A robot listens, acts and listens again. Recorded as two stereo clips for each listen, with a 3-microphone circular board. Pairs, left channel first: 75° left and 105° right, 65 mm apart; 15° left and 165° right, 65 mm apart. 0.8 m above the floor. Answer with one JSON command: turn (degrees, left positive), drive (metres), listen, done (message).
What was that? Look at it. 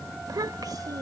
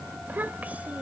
{"turn": -95}
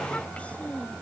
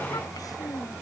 {"done": "Found it: a child speaking, straight ahead."}